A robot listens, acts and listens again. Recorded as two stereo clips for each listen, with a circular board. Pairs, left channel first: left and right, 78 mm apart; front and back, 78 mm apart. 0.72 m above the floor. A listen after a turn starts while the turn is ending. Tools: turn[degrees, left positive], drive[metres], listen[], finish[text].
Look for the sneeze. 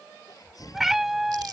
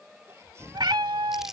Thought: The sneeze: 125° left.
Action: turn[125]
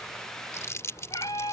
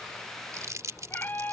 Action: finish[Facing where the sneeze came from. I can't hear it now.]